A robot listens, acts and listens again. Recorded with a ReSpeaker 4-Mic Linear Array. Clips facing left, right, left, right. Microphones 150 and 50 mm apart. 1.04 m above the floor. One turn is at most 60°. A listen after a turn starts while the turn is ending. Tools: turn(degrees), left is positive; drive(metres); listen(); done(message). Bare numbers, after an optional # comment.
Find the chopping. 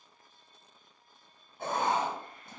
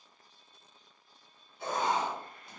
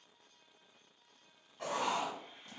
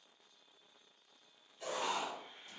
listen()
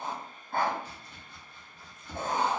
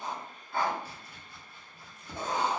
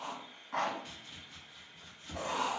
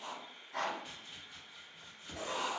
turn(-30)
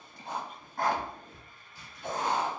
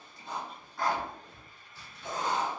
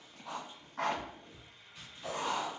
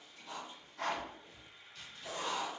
# So it is at 15° left.
turn(15)
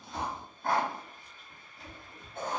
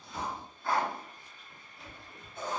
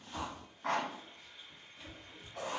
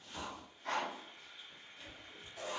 done("Facing the chopping.")